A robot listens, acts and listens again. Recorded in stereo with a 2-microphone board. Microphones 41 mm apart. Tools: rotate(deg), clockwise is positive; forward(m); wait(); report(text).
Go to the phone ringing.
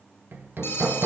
rotate(-70)
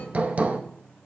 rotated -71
wait()
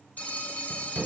rotate(-40)
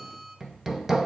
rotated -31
wait()
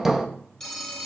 forward(1.0)
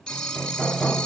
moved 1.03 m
rotate(-15)
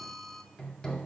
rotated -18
forward(1.0)
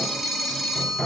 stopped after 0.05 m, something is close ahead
report("Arrived at the phone ringing, straight ahead.")